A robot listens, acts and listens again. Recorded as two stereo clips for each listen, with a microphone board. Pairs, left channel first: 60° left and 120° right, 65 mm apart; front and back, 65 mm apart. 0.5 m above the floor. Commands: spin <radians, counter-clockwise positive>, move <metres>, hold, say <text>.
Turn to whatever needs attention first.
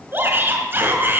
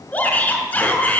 spin -1.05
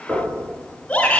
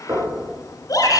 say Found it: a shout, straight ahead.